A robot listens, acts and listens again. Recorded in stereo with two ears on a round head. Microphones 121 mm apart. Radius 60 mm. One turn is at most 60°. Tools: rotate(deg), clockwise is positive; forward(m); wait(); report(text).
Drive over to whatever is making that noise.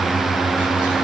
wait()
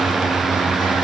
wait()
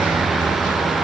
report("I can't make out anything to turn to.")